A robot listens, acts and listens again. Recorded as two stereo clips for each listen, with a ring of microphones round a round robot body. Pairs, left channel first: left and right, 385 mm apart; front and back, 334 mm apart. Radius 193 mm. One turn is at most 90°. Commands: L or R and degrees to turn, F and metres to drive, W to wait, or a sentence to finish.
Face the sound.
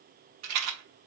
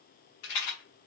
R40
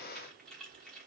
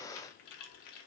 W
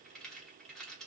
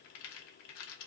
W
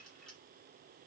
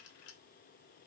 Facing where the rattle came from. I can't hear it now.